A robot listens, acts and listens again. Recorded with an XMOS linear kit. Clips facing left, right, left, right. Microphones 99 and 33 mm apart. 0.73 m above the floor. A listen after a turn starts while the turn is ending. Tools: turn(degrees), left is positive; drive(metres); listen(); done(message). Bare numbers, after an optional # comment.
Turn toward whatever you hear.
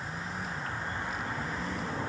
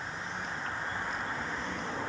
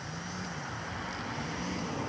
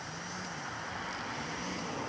listen()
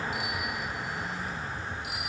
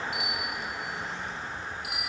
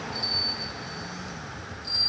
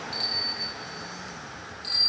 # The bicycle bell: about 65° right or 115° right.
turn(-65)
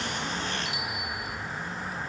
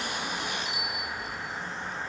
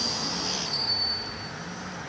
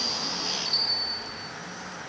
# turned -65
# So it is at 45° right.
turn(-45)
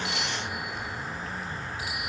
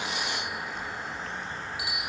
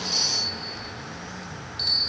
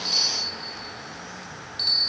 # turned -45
# The bicycle bell is now 15° right.
turn(-15)
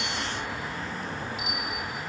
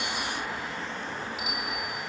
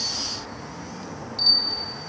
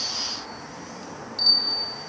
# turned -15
done("Facing the bicycle bell, over 4 m away.")